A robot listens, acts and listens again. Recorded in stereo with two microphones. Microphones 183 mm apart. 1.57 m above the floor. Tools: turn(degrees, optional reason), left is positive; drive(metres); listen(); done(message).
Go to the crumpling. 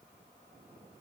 listen()
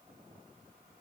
listen()
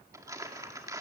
turn(degrees=-20, reason="The crumpling: about 20° right or 160° right.")
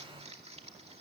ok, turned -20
turn(degrees=-140, reason="So it is at 140° right.")
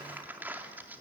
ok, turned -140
turn(degrees=-10, reason="The crumpling is now 10° right.")
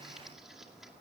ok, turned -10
drive(metres=1.0)
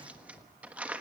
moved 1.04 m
turn(degrees=-10, reason="The crumpling is now 10° right.")
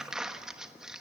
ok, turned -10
drive(metres=1.0)
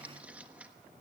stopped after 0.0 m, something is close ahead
turn(degrees=-10, reason="The crumpling is now 10° right.")
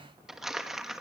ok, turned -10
done("I am next to the crumpling.")